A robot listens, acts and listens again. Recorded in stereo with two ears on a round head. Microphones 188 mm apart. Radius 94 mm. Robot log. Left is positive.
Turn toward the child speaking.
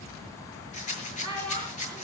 note: The child speaking: about 25° left or 155° left.
cmd yaw +25
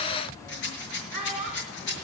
end: Found it: a child speaking, straight ahead, over 4 m away.